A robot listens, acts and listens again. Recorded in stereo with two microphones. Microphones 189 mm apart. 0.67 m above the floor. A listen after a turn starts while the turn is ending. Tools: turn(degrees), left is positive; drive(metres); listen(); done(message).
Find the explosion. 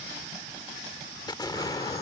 turn(degrees=20)
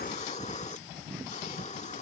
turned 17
listen()
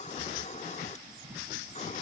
done("I heard an explosion, but can't make it out now. It was about 5° left or 140° left.")